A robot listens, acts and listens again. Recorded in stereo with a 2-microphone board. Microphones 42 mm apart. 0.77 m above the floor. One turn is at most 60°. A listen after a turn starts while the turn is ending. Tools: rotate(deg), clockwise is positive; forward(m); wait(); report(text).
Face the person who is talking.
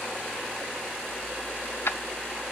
wait()
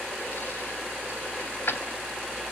wait()
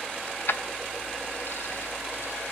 report("I can't make out anyone speaking, only keys jangling.")